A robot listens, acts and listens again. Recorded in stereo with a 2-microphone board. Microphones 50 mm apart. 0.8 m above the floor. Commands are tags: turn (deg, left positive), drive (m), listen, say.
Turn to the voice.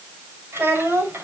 <turn deg="-55"/>
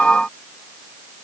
<listen/>
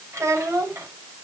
<turn deg="-75"/>
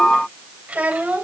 <turn deg="-30"/>
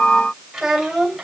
<say>Found it: a child speaking, straight ahead.</say>